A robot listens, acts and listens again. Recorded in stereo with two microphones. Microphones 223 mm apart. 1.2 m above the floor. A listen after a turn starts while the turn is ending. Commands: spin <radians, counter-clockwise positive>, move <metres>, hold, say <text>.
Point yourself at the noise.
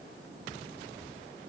hold
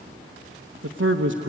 spin -1.05
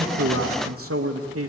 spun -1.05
spin -1.40
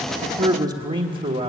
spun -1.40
spin -0.79
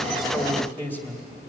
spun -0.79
say Facing the man speaking, 2 to 4 m away.